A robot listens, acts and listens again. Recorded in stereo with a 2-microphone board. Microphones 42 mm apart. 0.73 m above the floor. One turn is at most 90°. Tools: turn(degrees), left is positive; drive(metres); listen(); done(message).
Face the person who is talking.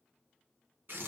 listen()
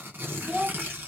turn(degrees=-30)
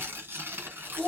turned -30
turn(degrees=20)
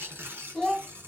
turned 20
turn(degrees=10)
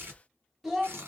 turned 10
done("Found it: a child speaking, straight ahead.")